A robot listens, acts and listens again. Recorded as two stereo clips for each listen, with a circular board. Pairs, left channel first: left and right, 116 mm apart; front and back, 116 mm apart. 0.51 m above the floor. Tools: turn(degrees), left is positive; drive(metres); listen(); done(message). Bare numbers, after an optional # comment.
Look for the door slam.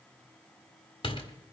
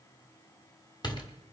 # The door slam: 50° left.
turn(50)
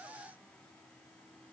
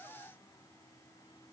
done("I heard a door slam from this way, but can't make it out now.")